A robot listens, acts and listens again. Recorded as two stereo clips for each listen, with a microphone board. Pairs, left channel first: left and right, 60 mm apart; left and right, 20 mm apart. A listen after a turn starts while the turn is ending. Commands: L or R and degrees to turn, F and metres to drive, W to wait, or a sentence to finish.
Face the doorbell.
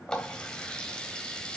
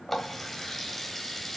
W
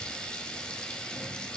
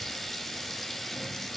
W
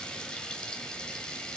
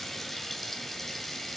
I can't make out a doorbell, only a running tap.